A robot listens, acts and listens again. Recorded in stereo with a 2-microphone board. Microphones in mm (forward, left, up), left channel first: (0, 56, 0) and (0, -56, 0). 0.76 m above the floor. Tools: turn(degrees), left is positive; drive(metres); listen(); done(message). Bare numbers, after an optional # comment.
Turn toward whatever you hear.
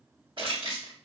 # The crushing: about 50° right or 130° right.
turn(-50)
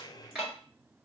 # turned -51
# So it is at 10° right.
turn(-10)
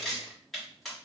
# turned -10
done("Found it: crushing, straight ahead, 1 to 2 m away.")